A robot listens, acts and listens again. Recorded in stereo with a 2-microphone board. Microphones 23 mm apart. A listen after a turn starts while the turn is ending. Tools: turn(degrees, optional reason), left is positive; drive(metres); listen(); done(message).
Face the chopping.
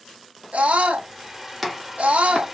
turn(degrees=-30)
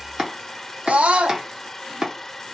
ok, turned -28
turn(degrees=-145, reason="So it is at 145° right.")
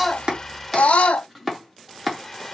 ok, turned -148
done("Found it: chopping, straight ahead.")